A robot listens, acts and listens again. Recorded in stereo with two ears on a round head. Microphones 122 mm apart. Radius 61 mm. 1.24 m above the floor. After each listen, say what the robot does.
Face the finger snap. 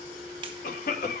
Turn 40° right.
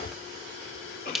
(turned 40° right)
Found it: a finger snap, straight ahead.